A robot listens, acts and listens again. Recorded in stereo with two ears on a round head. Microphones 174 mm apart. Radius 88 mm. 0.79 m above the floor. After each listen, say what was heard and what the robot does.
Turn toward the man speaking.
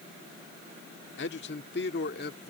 The man speaking: about 55° left or 125° left. Turn 55° left.
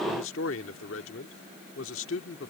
So it is at 75° left. Turn 75° left.
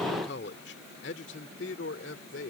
The man speaking is now 65° left. Turn 65° left.
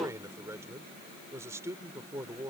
The man speaking is now 15° right. Turn 15° right.
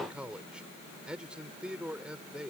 Facing the man speaking.